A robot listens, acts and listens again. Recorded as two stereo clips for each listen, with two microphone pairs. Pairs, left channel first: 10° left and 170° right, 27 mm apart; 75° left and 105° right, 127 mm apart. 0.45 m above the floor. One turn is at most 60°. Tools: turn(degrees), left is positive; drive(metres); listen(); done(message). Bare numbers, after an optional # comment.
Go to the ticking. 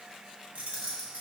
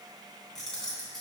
listen()
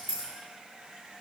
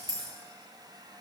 listen()
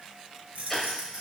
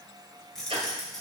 # The ticking: 75° right.
turn(-60)
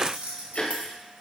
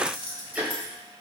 # The ticking is now 25° right.
turn(-25)
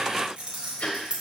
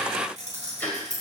drive(1.0)
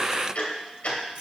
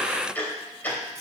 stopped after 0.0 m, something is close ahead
done("Something is in my way. I am facing the ticking but have not reached it.")